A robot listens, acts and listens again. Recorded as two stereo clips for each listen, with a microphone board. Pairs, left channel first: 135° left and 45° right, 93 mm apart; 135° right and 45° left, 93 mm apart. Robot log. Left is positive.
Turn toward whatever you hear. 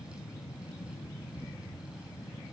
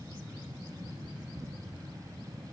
cmd idle
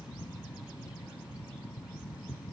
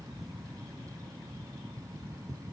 cmd idle
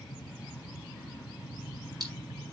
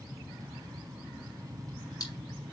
note: The splash: 90° right.
cmd yaw -90
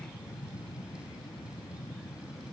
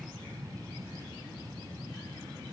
end: Facing where the splash came from. I can't hear it now.